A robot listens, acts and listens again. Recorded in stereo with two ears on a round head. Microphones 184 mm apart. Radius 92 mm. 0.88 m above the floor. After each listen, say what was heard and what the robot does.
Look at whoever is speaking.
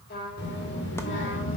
The child speaking: about 65° left or 115° left. Turn 65° left.
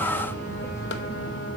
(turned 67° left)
So it is at 25° left. Turn 25° left.
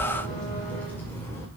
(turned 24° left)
The child speaking is now 15° left. Turn 15° left.
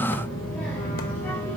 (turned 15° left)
The child speaking is now 10° left. Turn 10° left.
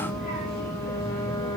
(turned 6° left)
Facing the child speaking, 2 to 4 m away.